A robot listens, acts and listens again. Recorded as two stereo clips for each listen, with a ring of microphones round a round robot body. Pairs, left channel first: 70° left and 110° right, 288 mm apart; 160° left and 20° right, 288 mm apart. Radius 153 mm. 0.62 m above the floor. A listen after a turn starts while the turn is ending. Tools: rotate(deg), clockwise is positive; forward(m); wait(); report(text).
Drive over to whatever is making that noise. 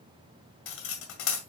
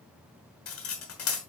rotate(-115)
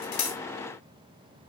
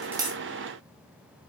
wait()
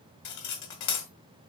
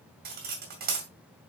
rotate(-35)
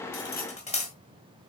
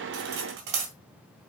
forward(1.0)
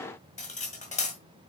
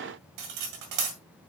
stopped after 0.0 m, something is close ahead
report("Something is in my way. I am facing the cutlery clinking but have not reached it.")